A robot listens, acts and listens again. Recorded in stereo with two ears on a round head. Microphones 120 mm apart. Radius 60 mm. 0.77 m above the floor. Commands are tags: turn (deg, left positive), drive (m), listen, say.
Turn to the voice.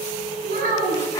<turn deg="-60"/>
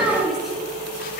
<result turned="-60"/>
<say>Found it: a child speaking, straight ahead, over 4 m away.</say>